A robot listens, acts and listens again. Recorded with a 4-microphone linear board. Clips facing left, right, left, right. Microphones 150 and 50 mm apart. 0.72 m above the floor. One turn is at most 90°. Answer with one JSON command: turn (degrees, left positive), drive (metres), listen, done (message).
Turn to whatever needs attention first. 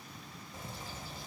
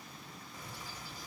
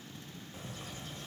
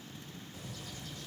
{"listen": true}
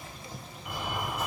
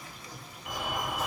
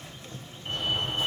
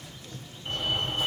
{"turn": -30}
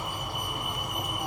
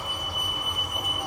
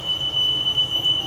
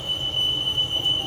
{"turn": 20}
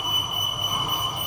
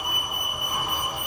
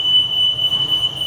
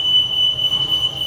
{"done": "Found it: a fire alarm, straight ahead, 2 to 4 m away."}